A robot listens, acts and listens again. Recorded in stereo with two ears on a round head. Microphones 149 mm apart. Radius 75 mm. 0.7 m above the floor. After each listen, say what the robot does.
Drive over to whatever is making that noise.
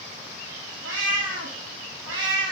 Turn 90° right.
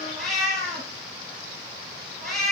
Drive 1.0 m forward.
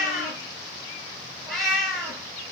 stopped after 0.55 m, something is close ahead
Something is in my way. I am facing the cat meowing but have not reached it.